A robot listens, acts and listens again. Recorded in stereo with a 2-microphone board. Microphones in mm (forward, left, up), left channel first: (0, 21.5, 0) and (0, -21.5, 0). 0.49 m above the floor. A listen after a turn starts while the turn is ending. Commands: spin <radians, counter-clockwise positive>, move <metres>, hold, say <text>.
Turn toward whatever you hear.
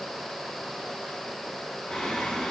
spin 0.52
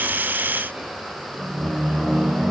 spin -0.44
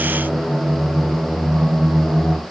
spin -0.35
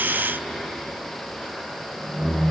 say Facing the singing.